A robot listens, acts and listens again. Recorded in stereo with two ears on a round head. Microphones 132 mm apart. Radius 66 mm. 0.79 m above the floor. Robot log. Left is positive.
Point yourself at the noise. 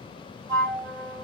note: The flute: about 25° right or 155° right.
cmd yaw -25
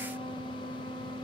end: Facing the flute, 1 to 2 m away.